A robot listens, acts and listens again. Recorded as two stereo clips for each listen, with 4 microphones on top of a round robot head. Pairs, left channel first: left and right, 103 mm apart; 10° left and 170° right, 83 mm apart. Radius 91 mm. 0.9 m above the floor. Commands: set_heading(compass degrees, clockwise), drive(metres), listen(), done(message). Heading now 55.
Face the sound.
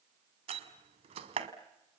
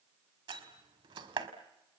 set_heading(190)
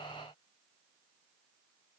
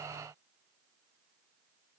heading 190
done("I heard a door slam from this way, but can't make it out now.")